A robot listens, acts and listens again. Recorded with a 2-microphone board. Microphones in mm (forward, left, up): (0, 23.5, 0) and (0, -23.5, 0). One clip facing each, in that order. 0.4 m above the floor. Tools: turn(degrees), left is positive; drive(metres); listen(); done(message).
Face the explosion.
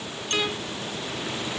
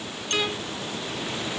listen()
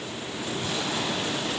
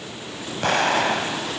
turn(degrees=-70)
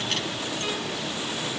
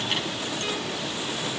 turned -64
listen()
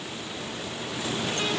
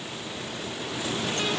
done("I heard an explosion, but can't make it out now. It was about 5° right or 50° right.")